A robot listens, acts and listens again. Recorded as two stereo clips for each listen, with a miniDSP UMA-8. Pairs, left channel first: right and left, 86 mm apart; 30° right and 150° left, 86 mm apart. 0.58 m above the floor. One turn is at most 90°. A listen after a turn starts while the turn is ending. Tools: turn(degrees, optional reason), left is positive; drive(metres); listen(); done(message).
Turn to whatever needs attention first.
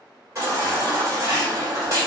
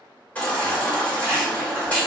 turn(degrees=40, reason="The baby crying: 40° left.")
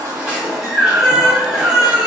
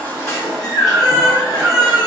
done("Found it: a baby crying, straight ahead.")